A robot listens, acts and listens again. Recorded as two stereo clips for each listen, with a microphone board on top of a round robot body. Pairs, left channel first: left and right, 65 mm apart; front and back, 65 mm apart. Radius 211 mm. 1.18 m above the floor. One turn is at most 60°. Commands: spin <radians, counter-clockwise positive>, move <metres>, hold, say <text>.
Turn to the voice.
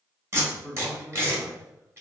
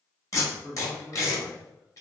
spin -1.05
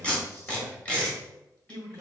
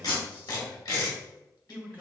spin -1.05
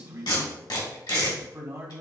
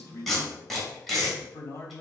spin -0.79
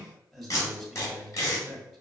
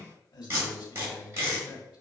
say Facing the man speaking, 1 to 2 m away.